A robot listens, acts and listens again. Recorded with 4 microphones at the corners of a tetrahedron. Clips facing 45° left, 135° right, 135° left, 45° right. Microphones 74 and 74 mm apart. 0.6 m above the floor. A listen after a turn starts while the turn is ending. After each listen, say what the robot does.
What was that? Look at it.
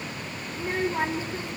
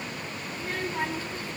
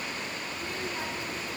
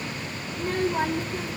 Turn 25° right.
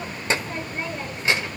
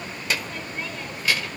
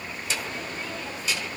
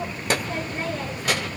Turn 20° right.
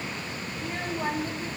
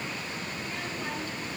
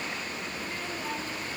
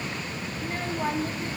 Turn 10° right.
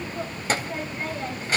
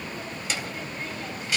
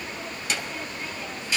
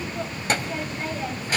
Facing the child speaking.